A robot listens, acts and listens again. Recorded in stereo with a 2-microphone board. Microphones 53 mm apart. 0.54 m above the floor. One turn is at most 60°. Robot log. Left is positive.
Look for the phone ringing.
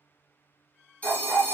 note: The phone ringing: about 30° left or 150° left.
cmd yaw +30
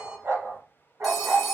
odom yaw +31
end: Found it: a phone ringing, straight ahead, 1 to 2 m away.